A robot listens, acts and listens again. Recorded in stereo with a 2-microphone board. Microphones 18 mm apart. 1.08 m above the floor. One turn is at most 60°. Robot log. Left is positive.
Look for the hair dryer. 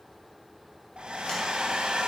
note: The hair dryer: about 70° right or 110° right.
cmd yaw -60
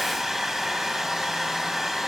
note: So it is at 15° right.
cmd yaw -15
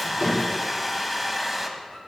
end: Found it: a hair dryer, straight ahead.